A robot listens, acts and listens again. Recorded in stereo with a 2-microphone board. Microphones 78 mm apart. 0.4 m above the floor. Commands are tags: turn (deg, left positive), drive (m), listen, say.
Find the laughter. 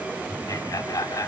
<turn deg="45"/>
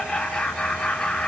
<turn deg="10"/>
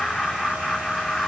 <say>Found it: laughter, straight ahead, 1 to 2 m away.</say>